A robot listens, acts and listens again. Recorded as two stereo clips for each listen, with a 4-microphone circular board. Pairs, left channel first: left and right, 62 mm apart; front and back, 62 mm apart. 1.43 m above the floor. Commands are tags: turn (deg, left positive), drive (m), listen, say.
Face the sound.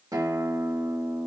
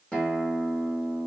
<turn deg="-75"/>
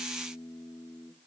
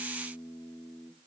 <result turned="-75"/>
<turn deg="-10"/>
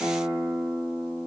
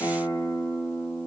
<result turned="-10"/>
<say>Facing the guitar, 1 to 2 m away.</say>